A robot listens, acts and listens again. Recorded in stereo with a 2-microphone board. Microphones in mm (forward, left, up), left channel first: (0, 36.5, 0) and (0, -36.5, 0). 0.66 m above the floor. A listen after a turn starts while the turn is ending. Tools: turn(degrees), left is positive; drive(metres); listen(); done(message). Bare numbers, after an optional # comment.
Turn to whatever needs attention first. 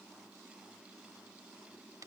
listen()
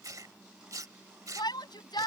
turn(90)
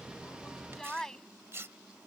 done("Found it: a shout, straight ahead.")